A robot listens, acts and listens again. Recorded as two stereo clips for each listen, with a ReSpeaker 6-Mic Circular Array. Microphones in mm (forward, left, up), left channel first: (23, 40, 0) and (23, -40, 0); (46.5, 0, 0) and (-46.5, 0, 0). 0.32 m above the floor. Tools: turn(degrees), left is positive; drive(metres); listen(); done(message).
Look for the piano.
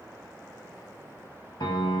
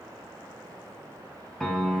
turn(degrees=85)
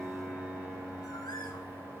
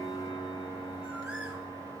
done("Found it: a piano, straight ahead.")